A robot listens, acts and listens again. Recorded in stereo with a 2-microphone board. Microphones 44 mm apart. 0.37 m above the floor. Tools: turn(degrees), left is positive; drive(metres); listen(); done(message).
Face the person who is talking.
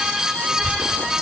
turn(degrees=70)
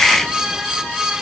listen()
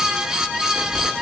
turn(degrees=35)
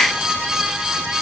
listen()
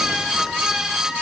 listen()
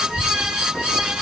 turn(degrees=10)
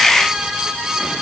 listen()
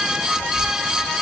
done("Facing the child speaking.")